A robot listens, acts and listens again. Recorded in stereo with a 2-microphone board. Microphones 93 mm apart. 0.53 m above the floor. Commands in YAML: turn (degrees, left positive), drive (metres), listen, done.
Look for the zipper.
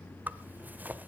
turn: -15
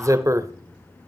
turn: -145
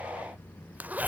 turn: -20
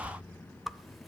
done: "Found it: a zipper, straight ahead, under 1 m away."